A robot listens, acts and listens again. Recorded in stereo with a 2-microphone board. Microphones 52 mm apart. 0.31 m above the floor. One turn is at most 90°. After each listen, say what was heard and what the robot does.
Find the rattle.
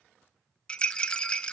The rattle: about 20° left or 160° left. Turn 20° left.
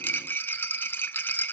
So it is at 135° left. Turn 90° left.
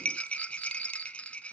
The rattle is now 25° left. Turn 25° left.
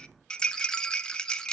The rattle is now 15° left. Turn 15° left.
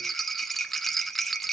Found it: a rattle, straight ahead.